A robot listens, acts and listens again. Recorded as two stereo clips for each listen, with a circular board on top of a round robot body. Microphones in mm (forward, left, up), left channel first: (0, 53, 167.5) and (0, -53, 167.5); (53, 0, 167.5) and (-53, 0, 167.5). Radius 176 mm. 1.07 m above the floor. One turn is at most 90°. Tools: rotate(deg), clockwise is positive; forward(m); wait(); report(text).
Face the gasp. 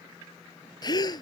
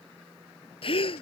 rotate(-40)
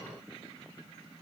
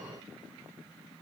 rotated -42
report("Facing where the gasp came from. I can't hear it now.")